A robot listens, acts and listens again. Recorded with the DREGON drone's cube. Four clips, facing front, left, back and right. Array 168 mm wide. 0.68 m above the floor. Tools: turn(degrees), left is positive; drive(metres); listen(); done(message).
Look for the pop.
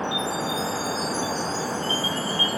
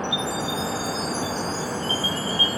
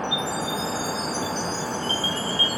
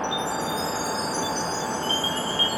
listen()
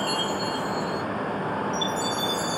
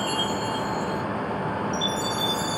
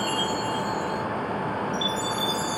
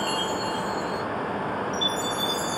listen()
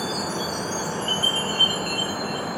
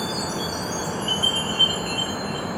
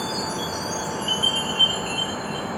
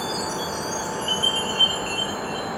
done("I can't make out a pop to turn to.")